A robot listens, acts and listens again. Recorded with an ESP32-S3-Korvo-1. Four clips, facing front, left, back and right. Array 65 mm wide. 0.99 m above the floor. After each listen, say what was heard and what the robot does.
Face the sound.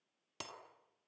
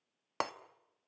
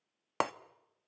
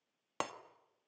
The breaking glass: 165° left. Turn 165° left.
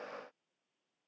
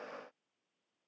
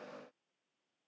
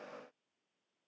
I heard breaking glass from this way, but can't make it out now.